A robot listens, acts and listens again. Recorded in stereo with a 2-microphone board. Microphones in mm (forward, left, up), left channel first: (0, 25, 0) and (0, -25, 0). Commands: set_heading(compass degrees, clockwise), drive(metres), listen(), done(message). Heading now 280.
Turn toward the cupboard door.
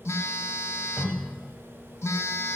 set_heading(310)
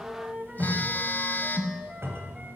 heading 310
set_heading(70)
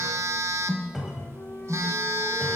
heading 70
done("Found it: a cupboard door, straight ahead.")